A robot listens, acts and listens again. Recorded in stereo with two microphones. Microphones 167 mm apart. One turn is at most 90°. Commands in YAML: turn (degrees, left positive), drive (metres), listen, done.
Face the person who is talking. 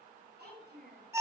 turn: -90
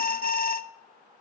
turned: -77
turn: -15
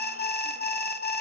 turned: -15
listen: true
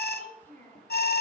turn: 10
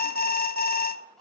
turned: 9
done: "Facing the child speaking, over 4 m away."